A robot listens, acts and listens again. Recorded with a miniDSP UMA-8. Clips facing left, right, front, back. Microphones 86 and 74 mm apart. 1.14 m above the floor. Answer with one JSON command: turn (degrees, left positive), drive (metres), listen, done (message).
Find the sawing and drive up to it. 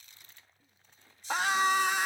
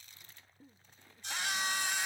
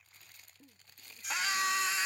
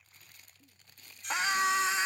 {"turn": -85}
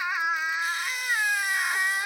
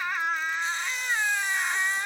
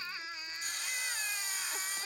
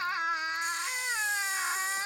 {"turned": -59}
{"turn": -25}
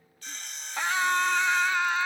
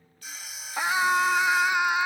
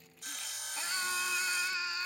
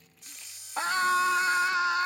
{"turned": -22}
{"drive": 1.0}
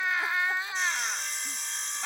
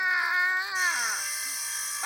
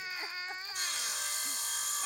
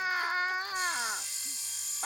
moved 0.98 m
{"drive": 1.0}
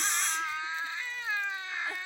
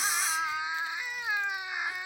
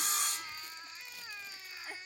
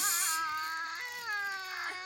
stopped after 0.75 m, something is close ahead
{"done": "I am next to the sawing."}